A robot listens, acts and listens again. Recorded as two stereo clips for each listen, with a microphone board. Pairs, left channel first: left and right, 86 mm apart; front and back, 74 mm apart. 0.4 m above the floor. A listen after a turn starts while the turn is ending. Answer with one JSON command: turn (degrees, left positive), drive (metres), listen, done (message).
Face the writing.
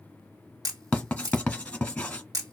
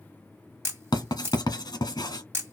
{"turn": 15}
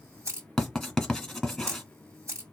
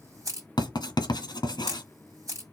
{"done": "Facing the writing."}